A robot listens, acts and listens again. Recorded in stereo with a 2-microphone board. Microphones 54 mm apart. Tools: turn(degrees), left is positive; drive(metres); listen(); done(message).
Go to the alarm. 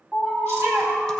turn(degrees=-25)
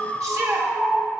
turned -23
drive(metres=1.0)
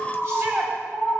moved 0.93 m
drive(metres=1.0)
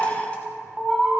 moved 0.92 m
turn(degrees=-10)
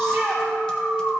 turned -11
drive(metres=1.0)
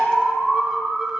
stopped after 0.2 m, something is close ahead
done("Arrived at the alarm, straight ahead.")